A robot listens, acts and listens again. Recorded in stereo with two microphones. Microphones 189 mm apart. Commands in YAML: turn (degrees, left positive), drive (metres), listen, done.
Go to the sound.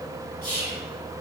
turn: 45
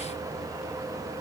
listen: true
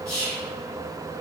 drive: 1.0
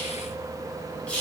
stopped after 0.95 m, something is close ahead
done: "Arrived at the whispering, straight ahead."